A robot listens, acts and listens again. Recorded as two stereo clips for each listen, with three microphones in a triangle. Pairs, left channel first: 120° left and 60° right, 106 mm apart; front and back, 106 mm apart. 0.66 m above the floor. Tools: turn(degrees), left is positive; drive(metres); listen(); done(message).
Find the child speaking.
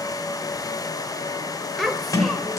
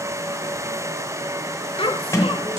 turn(degrees=30)
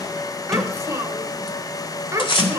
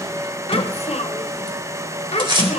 done("Facing the child speaking.")